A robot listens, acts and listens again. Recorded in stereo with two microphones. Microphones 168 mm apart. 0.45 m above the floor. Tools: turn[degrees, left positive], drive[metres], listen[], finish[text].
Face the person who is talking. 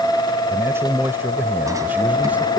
Action: turn[-30]
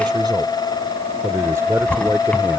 Thought: The man speaking: about 15° right or 165° right.
Action: turn[-15]
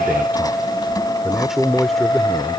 Action: turn[30]
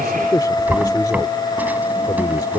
Thought: So it is at 155° left.
Action: turn[155]
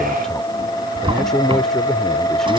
Action: finish[Found it: a man speaking, straight ahead.]